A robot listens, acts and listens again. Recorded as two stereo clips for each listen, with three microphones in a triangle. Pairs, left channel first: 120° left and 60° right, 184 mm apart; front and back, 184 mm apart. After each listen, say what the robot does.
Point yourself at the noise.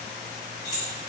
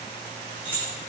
Turn 100° left.
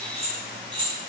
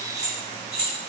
Found it: keys jangling, straight ahead.